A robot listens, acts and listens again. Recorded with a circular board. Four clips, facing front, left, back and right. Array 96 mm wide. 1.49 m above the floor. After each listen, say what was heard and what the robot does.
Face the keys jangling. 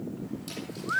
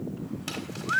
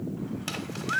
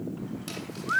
The keys jangling: 140° right. Turn 140° right.
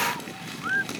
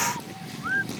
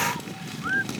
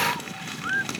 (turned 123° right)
Nothing new. It was at 20° right. Turn 20° right.
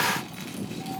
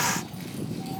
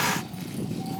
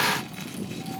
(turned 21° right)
Keep listening.
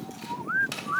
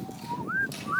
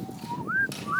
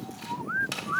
Facing where the keys jangling came from. I can't hear it now.